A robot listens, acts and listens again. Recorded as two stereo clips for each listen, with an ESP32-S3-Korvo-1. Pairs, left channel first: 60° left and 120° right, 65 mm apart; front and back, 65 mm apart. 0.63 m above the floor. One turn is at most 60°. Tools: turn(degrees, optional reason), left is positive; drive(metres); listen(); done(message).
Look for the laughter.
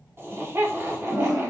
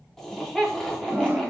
turn(degrees=-60, reason="The laughter: 80° right.")
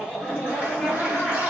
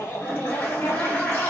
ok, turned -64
turn(degrees=-20, reason="The laughter is now 20° right.")
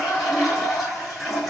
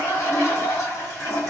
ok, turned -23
listen()
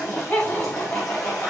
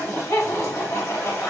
done("Facing the laughter.")